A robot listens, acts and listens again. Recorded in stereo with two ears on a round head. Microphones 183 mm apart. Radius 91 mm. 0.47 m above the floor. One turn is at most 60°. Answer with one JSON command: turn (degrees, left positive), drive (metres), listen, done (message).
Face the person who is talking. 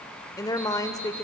{"turn": 20}
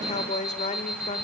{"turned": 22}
{"turn": 60}
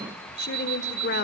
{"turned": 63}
{"turn": 60}
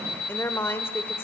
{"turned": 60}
{"turn": 15}
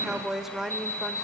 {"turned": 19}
{"done": "Facing the woman speaking."}